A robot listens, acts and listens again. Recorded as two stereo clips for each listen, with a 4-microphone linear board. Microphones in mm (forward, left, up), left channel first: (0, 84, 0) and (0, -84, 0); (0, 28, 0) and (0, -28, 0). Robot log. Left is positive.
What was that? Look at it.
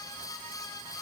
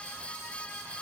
cmd idle
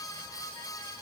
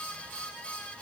cmd idle
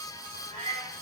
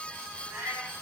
note: The cat meowing: about 45° right or 135° right.
cmd yaw -45
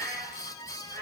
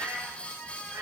note: So it is at 110° right.
cmd yaw -110
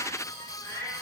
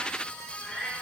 note: The cat meowing is now 10° left.
cmd yaw +10
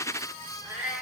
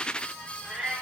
end: Found it: a cat meowing, straight ahead, 2 to 4 m away.